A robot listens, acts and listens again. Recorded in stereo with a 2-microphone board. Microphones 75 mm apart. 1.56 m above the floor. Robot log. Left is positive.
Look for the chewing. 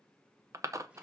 note: The chewing: about 45° right or 135° right.
cmd yaw -45
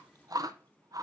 note: So it is at 80° right.
cmd yaw -80
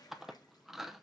end: Facing the chewing, under 1 m away.